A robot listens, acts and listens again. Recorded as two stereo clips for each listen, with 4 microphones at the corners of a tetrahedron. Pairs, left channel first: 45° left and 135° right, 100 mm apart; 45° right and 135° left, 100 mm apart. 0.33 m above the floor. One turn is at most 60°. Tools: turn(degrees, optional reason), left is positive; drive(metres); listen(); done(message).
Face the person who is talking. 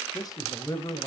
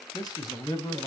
done("Facing the man speaking, 1 to 2 m away.")